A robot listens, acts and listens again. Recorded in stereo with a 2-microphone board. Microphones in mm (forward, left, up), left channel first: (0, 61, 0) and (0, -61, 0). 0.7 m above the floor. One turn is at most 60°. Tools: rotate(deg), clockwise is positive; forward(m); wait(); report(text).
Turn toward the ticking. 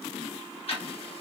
rotate(-50)
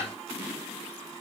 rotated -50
report("Found it: ticking, straight ahead.")